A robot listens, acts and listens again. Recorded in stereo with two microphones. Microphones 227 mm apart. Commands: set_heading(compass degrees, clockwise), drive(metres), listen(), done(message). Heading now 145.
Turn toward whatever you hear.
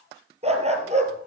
set_heading(175)
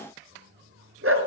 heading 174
set_heading(279)
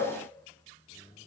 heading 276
listen()
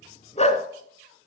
set_heading(246)
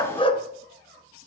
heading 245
set_heading(220)
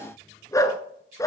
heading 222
set_heading(207)
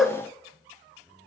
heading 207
done("Facing the dog barking.")